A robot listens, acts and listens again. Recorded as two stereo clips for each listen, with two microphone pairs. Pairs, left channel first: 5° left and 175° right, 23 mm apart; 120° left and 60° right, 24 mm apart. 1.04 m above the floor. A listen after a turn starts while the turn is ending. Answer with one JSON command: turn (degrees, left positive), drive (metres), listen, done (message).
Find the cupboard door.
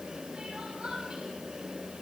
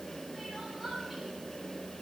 {"listen": true}
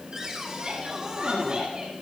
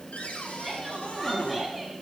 {"turn": 120}
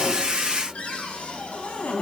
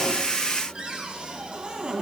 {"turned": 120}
{"turn": -10}
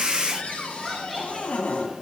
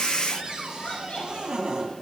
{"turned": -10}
{"done": "Facing the cupboard door."}